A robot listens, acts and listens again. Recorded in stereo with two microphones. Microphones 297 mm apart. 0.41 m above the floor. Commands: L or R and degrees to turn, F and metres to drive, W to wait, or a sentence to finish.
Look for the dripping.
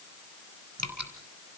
R60
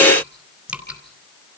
Facing the dripping.